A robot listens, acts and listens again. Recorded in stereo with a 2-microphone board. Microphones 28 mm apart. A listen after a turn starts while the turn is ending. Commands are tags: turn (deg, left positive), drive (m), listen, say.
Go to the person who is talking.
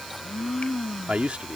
<turn deg="-50"/>
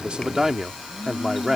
<turn deg="-15"/>
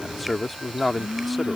<drive m="1.0"/>
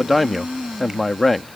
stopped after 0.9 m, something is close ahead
<say>Arrived at the man speaking, straight ahead.</say>